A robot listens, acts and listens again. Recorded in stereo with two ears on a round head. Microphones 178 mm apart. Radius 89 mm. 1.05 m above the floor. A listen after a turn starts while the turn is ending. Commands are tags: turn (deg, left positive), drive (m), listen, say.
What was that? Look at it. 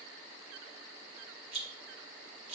<turn deg="-30"/>
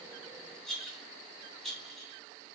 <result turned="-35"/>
<say>Facing the rattle.</say>